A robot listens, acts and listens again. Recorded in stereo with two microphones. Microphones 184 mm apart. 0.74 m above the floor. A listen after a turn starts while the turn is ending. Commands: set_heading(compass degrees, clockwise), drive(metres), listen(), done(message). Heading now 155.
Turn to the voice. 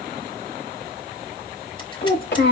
set_heading(65)
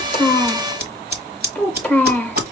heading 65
set_heading(55)
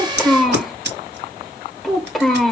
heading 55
done("Found it: a child speaking, straight ahead.")